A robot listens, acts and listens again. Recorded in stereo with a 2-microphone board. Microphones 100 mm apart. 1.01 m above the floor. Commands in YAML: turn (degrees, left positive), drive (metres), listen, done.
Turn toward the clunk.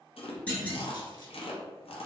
turn: 30
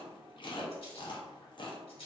listen: true
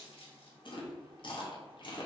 done: "I heard a clunk, but can't make it out now. It was about 15° right or 135° left."